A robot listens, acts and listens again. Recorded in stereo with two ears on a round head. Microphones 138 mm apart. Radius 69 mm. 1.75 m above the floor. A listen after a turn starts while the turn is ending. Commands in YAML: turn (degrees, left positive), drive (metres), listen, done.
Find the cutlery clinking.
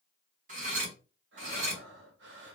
turn: -50
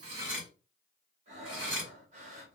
turn: -15
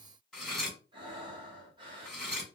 done: "Found it: cutlery clinking, straight ahead."